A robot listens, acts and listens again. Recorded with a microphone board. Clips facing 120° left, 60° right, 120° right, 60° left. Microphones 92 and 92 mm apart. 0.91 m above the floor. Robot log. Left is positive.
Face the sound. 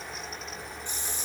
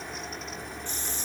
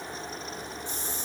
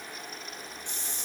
note: The hiss: 45° left.
cmd yaw +45
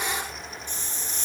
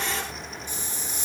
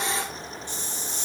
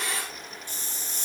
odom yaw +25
note: The hiss is now 20° left.
cmd yaw +20
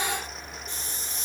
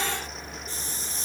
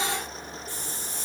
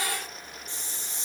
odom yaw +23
end: Facing the hiss, 2 to 4 m away.